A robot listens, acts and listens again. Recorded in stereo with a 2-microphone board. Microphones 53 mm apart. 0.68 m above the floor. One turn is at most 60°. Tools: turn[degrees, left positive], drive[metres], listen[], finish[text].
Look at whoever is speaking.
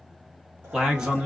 Action: turn[-30]
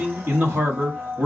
Thought: So it is at 135° right.
Action: turn[-60]
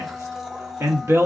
Thought: The man speaking is now 90° right.
Action: turn[-60]
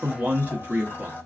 Thought: The man speaking is now 40° right.
Action: turn[-40]
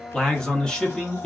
Thought: The man speaking is now 20° left.
Action: turn[20]
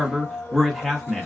Action: finish[Facing the man speaking, under 1 m away.]